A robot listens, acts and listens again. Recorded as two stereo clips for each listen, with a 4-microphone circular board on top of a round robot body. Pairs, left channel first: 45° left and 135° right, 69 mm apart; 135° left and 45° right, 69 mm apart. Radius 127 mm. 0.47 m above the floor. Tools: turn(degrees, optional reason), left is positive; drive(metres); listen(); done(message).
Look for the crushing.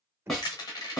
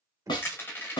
turn(degrees=75, reason="The crushing: 75° left.")
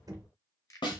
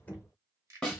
listen()
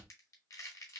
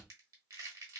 done("Facing the crushing, 1 to 2 m away.")